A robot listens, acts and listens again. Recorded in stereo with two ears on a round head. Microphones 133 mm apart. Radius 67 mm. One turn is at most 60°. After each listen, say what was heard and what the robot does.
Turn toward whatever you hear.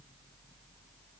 Keep listening.
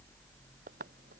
The tapping: about 60° right or 120° right. Turn 60° right.
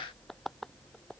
Found it: tapping, straight ahead.